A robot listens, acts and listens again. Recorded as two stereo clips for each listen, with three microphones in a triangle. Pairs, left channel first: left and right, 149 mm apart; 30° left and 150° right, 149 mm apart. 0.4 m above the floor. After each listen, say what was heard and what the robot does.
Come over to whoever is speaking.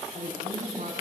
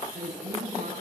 The woman speaking: 115° right. Turn 115° right.
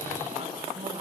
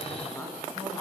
The woman speaking is now 40° right. Turn 40° right.
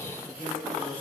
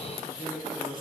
The woman speaking is now 10° left. Turn 10° left.
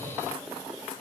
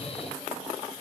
Keep listening.
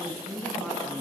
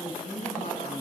Drive 1.0 m forward.
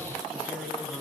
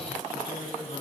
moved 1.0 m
Drive 1.0 m forward.
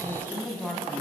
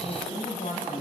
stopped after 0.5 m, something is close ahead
The woman speaking is now 10° left. Turn 10° left.
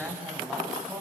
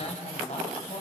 Something is in my way. I am facing the woman speaking but have not reached it.